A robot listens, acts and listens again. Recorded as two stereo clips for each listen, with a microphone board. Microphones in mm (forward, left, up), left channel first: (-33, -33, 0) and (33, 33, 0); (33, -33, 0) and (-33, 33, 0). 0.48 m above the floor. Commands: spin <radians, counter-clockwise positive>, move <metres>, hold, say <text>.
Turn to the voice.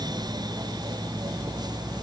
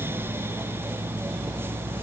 hold
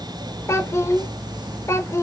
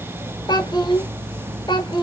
spin -1.40
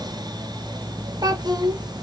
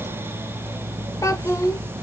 say Found it: a child speaking, straight ahead, under 1 m away.